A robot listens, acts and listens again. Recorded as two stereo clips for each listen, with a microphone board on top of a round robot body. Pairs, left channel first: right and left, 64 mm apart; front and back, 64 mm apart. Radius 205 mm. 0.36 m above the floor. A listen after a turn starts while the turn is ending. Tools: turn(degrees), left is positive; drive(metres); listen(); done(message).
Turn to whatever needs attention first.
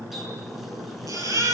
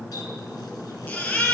turn(degrees=65)
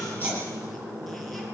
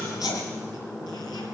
listen()
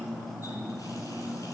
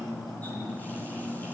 listen()
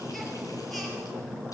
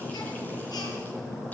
done("Facing where the baby crying came from. I can't hear it now.")